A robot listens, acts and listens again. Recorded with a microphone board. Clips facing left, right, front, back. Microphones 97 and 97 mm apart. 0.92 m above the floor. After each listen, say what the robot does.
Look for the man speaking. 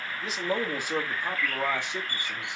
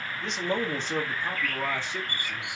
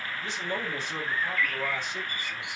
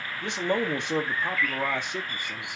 Turn 160° left.
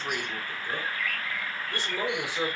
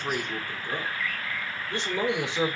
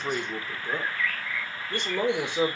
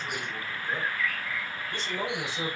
Turn 25° right.
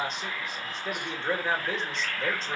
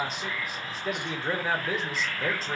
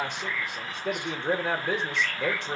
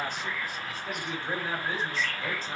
Found it: a man speaking, straight ahead, 2 to 4 m away.